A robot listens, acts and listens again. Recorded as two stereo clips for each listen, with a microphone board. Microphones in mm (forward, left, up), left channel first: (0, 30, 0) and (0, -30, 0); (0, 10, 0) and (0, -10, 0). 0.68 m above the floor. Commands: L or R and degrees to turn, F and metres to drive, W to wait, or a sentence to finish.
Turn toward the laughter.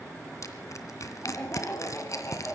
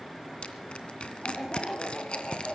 L40
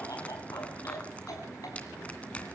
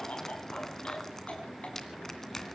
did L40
L100
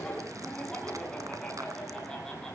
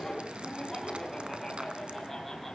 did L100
L10
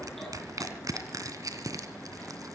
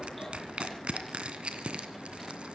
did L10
W
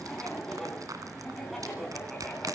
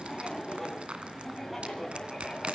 Facing the laughter, over 4 m away.